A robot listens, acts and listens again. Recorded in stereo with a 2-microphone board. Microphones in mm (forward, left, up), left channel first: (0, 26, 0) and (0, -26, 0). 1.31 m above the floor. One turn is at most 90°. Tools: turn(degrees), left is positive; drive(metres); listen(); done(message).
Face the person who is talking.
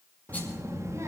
turn(degrees=-90)
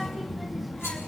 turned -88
done("Found it: a child speaking, straight ahead, 1 to 2 m away.")